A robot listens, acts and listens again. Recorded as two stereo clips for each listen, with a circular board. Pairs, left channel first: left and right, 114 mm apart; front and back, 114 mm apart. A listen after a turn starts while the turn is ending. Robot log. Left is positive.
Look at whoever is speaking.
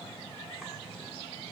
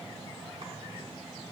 cmd idle
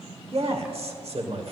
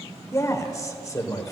note: The man speaking: 60° right.
cmd yaw -60
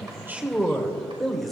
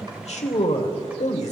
end: Found it: a man speaking, straight ahead, 1 to 2 m away.